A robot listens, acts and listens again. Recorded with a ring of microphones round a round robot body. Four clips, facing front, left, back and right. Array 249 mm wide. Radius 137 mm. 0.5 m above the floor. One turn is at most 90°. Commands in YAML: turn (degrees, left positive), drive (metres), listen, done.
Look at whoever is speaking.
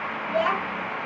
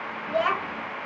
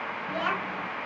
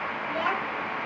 turn: 70
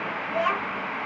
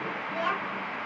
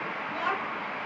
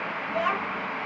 turn: -25
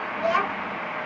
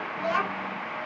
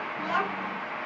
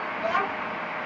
done: "Facing the child speaking, 1 to 2 m away."